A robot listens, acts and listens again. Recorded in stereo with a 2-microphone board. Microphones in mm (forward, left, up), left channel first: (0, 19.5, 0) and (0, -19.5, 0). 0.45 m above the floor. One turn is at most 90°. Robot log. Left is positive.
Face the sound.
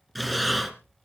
cmd yaw +30
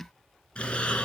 note: So it is at 155° left.
cmd yaw +90
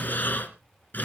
note: The breathing is now 50° left.
cmd yaw +50
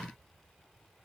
cmd idle
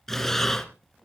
note: The breathing is now 10° left.
cmd yaw +10
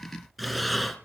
end: Found it: breathing, straight ahead, 2 to 4 m away.